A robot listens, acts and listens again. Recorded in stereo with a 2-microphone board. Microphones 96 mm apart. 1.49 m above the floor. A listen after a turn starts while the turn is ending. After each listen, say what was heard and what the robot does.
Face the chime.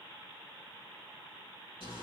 Keep listening.
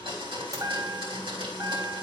The chime: about 40° right or 140° right. Turn 40° right.
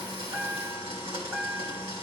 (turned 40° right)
So it is at 10° right. Turn 10° right.
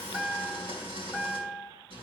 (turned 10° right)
Found it: a chime, straight ahead, 1 to 2 m away.